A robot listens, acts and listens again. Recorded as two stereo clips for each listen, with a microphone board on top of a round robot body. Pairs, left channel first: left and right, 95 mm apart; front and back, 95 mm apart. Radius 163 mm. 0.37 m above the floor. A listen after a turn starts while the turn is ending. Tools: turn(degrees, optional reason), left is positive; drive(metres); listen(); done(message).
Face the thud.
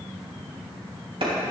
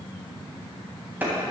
listen()
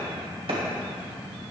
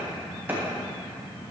listen()
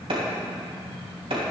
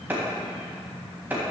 done("I can't make out a thud to turn to.")